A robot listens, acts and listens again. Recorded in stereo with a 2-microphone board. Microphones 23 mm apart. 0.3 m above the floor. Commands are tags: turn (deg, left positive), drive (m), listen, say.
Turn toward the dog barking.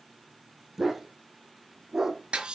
<turn deg="-20"/>
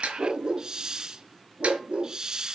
<turn deg="-125"/>
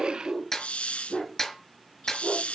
<say>Found it: a dog barking, straight ahead, over 4 m away.</say>